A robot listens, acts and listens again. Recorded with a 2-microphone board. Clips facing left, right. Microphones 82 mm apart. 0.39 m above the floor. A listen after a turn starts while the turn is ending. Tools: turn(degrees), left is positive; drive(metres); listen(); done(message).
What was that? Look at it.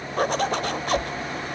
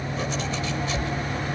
turn(degrees=55)
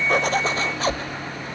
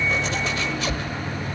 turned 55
turn(degrees=45)
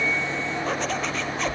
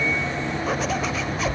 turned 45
done("Facing the zipper, under 1 m away.")